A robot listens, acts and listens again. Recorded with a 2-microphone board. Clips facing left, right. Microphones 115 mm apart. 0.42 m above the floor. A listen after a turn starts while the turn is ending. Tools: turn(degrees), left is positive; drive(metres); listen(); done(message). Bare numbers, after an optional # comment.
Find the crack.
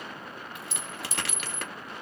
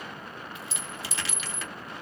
# The crack: about 65° left or 115° left.
turn(65)
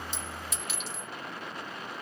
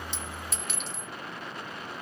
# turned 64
listen()
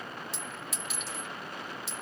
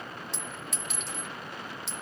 done("I heard a crack, but can't make it out now. It was about straight ahead or 50° left.")